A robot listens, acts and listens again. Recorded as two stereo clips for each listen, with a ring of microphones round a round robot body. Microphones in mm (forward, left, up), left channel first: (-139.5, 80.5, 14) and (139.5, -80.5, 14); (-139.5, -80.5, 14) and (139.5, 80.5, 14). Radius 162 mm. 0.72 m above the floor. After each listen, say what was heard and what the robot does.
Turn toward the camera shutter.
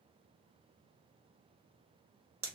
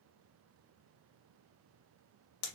Keep listening.
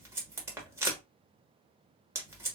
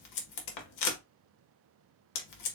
Keep listening.
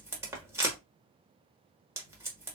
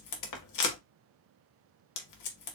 I can't make out a camera shutter to turn to.